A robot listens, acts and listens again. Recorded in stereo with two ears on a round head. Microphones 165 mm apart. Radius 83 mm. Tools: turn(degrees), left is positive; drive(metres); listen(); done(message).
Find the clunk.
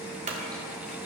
turn(degrees=-40)
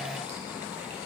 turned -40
listen()
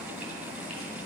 done("I heard a clunk, but can't make it out now. It was about straight ahead or 100° right.")